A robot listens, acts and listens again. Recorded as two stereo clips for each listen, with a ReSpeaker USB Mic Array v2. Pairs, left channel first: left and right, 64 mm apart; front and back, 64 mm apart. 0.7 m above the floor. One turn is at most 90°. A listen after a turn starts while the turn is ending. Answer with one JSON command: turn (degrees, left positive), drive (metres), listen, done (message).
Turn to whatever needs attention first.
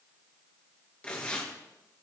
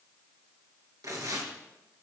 {"listen": true}
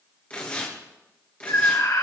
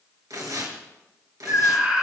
{"turn": 90}
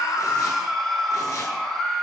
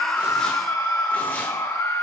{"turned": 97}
{"done": "Found it: a scream, straight ahead."}